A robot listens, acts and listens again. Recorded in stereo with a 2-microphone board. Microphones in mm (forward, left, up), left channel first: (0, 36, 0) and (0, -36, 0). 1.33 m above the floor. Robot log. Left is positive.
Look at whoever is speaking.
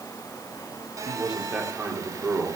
cmd yaw -30
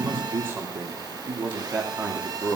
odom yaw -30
note: So it is at 150° right.
cmd yaw -150
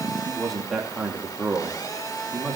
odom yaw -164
end: Found it: a man speaking, straight ahead.